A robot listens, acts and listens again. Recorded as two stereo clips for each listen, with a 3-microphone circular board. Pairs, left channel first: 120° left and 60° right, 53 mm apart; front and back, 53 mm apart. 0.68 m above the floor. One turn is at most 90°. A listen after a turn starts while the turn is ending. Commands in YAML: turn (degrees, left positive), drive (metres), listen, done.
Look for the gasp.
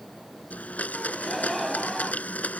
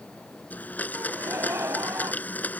turn: -90
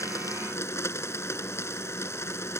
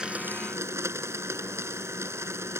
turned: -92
turn: -60
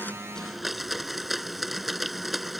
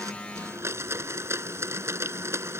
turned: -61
done: "Facing where the gasp came from. I can't hear it now."